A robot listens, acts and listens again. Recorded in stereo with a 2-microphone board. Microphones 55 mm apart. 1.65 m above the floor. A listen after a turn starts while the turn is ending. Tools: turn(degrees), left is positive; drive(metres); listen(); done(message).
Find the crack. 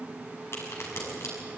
turn(degrees=55)
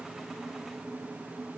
listen()
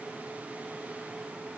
done("I heard a crack, but can't make it out now. It was about straight ahead or 70° left.")